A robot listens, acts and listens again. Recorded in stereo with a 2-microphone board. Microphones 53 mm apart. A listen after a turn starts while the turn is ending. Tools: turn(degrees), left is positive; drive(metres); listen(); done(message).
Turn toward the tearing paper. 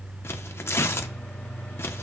turn(degrees=50)
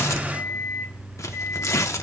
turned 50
turn(degrees=75)
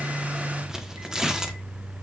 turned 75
turn(degrees=-10)
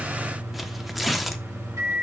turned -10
done("Found it: tearing paper, straight ahead, under 1 m away.")